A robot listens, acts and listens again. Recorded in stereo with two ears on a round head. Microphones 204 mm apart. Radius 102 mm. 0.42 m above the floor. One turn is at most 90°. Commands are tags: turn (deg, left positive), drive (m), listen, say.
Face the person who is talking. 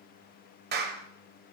<listen/>
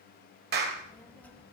<turn deg="30"/>
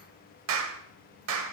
<turn deg="90"/>
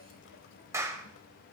<turn deg="60"/>
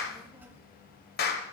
<turn deg="-10"/>
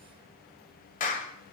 <say>Found it: a child speaking, straight ahead, 1 to 2 m away.</say>